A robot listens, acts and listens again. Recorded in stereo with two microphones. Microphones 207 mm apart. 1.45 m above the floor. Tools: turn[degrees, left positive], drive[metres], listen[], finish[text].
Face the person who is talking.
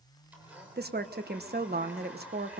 Thought: The woman speaking: about 55° right or 125° right.
Action: turn[-55]
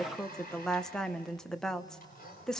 Action: finish[Found it: a woman speaking, straight ahead, 1 to 2 m away.]